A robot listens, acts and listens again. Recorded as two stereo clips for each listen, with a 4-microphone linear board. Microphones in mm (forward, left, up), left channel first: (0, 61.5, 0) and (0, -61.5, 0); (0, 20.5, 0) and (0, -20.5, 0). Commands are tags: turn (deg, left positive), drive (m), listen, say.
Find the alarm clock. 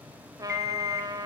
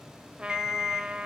<turn deg="-30"/>
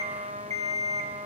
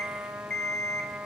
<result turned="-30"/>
<turn deg="25"/>
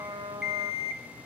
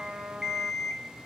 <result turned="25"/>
<say>Found it: an alarm clock, straight ahead.</say>